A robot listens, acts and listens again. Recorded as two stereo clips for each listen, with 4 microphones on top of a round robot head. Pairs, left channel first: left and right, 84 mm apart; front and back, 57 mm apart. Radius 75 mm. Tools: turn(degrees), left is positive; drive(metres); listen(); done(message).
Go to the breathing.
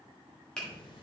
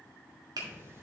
turn(degrees=130)
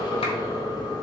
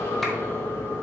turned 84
turn(degrees=45)
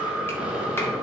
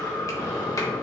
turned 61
turn(degrees=-15)
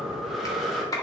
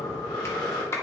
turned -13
drive(metres=1.0)
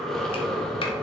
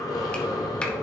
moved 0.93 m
drive(metres=1.0)
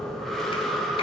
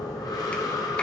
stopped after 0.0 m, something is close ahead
done("I am next to the breathing.")